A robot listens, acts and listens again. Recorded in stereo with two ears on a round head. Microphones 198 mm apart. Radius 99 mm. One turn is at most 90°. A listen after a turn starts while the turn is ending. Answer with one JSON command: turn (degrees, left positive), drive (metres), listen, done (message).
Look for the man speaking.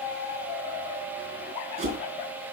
{"listen": true}
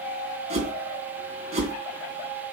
{"listen": true}
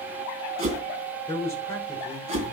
{"turn": 30}
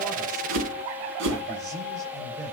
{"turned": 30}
{"listen": true}
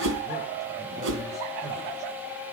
{"listen": true}
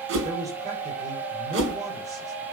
{"turn": -15}
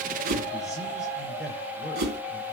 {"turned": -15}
{"listen": true}
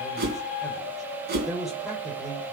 {"done": "Facing the man speaking, over 4 m away."}